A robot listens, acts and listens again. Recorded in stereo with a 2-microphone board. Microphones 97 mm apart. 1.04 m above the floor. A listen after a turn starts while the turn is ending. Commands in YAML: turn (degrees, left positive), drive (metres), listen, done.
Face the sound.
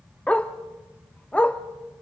turn: 30
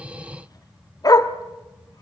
turn: 135
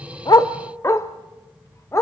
turn: 35
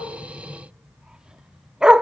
turn: -10
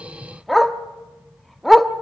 done: "Facing the dog barking, under 1 m away."